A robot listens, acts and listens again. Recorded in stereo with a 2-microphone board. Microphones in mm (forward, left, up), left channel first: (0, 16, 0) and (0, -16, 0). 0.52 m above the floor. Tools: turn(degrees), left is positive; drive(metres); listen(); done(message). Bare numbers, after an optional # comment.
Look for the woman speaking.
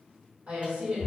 # The woman speaking: about 50° right or 130° right.
turn(-50)
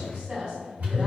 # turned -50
# So it is at 20° right.
turn(-20)
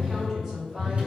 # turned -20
# The woman speaking is now 10° right.
turn(-10)
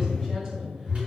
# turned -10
listen()
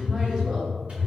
listen()
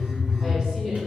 # The woman speaking is now 10° right.
turn(-10)
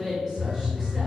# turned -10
done("Found it: a woman speaking, straight ahead.")